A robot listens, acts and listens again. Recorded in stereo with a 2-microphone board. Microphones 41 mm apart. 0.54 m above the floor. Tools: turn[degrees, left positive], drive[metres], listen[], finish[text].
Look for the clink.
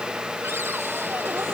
Action: listen[]
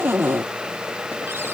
Action: listen[]
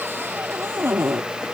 Action: finish[I can't make out a clink, only a cupboard door.]